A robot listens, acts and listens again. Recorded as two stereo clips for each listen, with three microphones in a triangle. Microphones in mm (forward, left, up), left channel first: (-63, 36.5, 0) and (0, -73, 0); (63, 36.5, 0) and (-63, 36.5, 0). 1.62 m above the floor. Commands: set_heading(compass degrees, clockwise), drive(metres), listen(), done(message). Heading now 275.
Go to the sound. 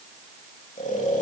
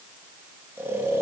set_heading(165)
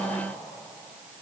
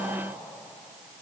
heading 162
listen()
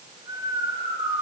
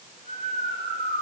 drive(1.0)
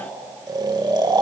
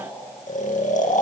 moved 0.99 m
drive(1.0)
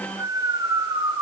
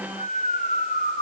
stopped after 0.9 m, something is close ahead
done("I am next to the snoring.")